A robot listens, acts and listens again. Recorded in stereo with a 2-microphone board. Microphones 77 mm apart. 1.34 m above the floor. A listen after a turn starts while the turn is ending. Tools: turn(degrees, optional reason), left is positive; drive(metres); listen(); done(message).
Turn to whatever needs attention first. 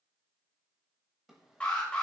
turn(degrees=15, reason="The alarm: about 15° left or 165° left.")
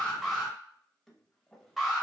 done("Facing the alarm.")